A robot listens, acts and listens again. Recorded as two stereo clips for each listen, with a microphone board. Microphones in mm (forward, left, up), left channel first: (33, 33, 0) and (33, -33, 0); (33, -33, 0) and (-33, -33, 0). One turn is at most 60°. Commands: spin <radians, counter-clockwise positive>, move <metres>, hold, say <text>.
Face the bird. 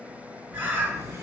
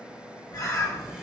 spin -0.44
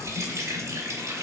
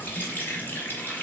hold
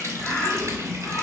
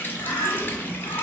spin 0.35
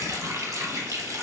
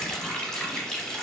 hold
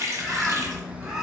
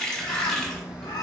say Facing the bird, under 1 m away.